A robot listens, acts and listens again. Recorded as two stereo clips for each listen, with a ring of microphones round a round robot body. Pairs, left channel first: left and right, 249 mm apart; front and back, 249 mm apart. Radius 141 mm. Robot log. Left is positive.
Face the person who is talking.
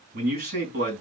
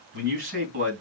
note: The man speaking: 150° right.
cmd yaw -150
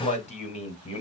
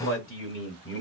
note: The man speaking is now 30° left.
cmd yaw +30
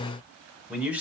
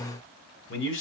note: The man speaking is now 10° right.
cmd yaw -10
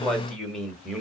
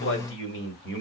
end: Found it: a man speaking, straight ahead, 1 to 2 m away.